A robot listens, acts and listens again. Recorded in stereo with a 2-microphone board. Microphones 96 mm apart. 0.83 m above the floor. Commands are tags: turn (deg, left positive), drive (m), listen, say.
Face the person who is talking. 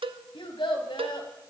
<turn deg="65"/>
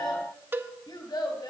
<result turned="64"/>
<turn deg="50"/>
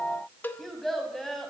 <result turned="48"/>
<say>Facing the child speaking, 2 to 4 m away.</say>